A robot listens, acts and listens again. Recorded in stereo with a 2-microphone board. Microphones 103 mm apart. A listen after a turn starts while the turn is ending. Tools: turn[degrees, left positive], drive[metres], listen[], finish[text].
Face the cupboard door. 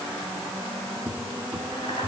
Action: turn[-30]
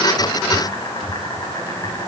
Thought: So it is at 20° left.
Action: turn[20]
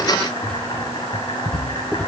Thought: The cupboard door is now 10° left.
Action: turn[10]
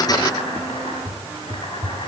Action: finish[Found it: a cupboard door, straight ahead, 1 to 2 m away.]